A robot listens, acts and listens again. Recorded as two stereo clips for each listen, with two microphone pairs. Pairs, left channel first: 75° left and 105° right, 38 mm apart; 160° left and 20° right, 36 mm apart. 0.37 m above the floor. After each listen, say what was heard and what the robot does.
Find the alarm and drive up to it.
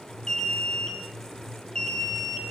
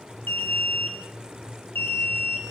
The alarm: 145° left. Turn 145° left.
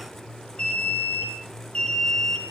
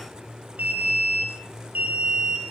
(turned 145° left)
The alarm is now 15° left. Turn 15° left.
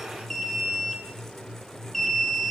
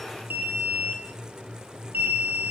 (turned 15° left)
The alarm is now 10° right. Turn 10° right.
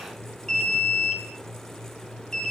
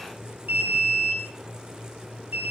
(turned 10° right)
Drive 1.0 m forward.
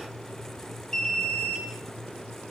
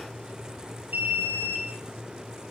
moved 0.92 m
Drive 1.0 m forward.
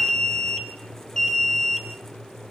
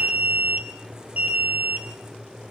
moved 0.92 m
Drive 1.0 m forward.
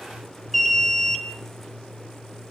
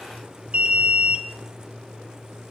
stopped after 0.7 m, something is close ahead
I am next to the alarm.